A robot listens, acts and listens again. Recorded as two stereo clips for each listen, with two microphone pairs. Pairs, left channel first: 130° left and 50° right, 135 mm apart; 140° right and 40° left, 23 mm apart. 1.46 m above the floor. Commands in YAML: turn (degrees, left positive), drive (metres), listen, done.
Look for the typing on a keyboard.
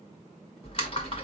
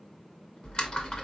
turn: 180
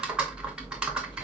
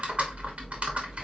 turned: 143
turn: 35
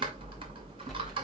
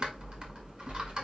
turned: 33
done: "Found it: typing on a keyboard, straight ahead."